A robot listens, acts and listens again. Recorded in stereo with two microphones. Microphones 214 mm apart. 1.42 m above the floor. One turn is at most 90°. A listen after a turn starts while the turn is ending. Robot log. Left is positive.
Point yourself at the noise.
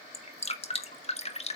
note: The dripping: about 30° left or 150° left.
cmd yaw +30
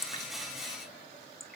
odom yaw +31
end: Found it: dripping, straight ahead, 1 to 2 m away.